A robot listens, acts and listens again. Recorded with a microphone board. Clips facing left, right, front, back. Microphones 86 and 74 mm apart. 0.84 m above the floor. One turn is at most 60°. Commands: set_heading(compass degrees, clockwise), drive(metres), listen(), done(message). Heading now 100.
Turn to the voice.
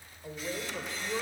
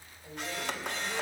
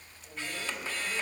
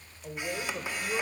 set_heading(40)
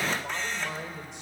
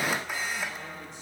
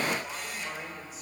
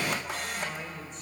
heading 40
set_heading(340)
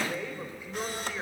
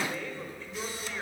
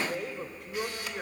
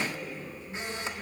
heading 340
set_heading(325)
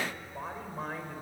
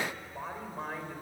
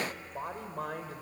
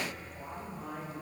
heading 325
done("Facing the woman speaking, 2 to 4 m away.")